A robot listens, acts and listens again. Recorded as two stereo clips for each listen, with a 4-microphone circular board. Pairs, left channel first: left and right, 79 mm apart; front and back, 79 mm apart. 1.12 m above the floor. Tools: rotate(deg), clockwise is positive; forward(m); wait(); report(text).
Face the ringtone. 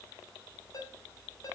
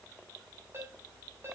rotate(-125)
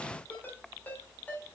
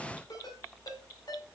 rotate(-25)
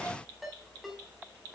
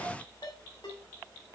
report("Found it: a ringtone, straight ahead, over 4 m away.")